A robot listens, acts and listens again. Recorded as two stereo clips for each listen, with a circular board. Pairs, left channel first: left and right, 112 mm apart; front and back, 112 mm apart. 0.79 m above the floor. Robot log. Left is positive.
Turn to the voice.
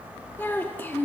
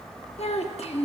note: The child speaking: 20° left.
cmd yaw +20
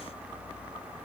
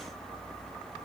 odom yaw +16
cmd idle
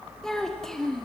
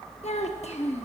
end: Facing the child speaking, under 1 m away.